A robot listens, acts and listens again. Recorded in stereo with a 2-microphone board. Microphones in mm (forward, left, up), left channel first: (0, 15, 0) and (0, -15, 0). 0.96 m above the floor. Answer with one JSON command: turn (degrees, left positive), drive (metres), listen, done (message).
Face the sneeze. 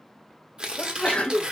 {"turn": 45}
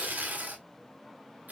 {"listen": true}
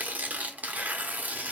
{"done": "I heard a sneeze, but can't make it out now. It was about straight ahead or 90° left."}